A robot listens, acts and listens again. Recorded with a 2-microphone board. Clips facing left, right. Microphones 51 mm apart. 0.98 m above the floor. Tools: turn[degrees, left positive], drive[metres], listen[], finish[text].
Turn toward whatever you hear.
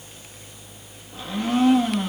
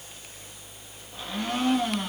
Action: turn[30]
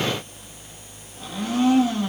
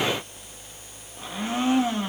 Thought: So it is at 25° right.
Action: turn[-25]
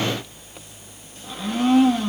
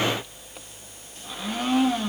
Action: finish[Found it: a blender, straight ahead, 1 to 2 m away.]